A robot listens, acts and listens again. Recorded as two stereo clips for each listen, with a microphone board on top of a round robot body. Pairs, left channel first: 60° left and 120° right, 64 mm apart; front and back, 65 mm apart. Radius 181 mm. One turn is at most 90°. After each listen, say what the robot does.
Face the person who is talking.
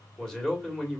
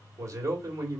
Turn 90° left.
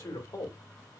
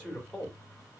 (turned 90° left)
Turn 75° left.
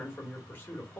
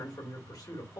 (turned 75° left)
Facing the man speaking, 2 to 4 m away.